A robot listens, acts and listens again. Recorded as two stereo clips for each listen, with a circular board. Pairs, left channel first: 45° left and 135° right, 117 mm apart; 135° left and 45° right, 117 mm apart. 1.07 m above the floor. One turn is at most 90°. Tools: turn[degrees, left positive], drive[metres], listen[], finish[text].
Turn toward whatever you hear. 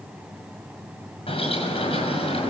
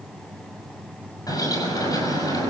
Thought: The bird: 80° left.
Action: turn[80]
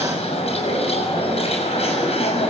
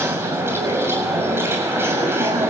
Thought: The bird is now 20° left.
Action: turn[20]
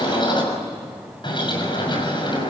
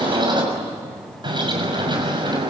Action: finish[Facing the bird, over 4 m away.]